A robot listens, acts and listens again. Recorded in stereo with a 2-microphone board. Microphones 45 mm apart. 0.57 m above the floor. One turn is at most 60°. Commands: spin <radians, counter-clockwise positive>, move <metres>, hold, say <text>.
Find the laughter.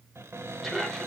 spin 0.52
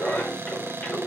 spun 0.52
spin 1.05
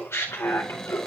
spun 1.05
spin 1.05
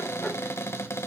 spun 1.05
spin 0.26
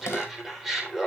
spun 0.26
say Facing the laughter.